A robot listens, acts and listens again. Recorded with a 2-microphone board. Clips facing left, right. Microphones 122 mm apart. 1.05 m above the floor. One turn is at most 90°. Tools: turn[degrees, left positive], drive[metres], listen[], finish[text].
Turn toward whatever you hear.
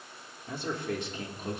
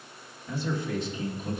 Thought: The man speaking: about 70° left or 110° left.
Action: turn[70]
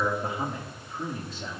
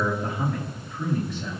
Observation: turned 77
Thought: So it is at 30° left.
Action: turn[30]
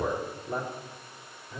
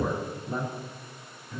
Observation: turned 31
Thought: The man speaking is now 20° left.
Action: turn[20]
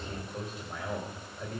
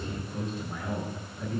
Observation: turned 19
Action: finish[Facing the man speaking.]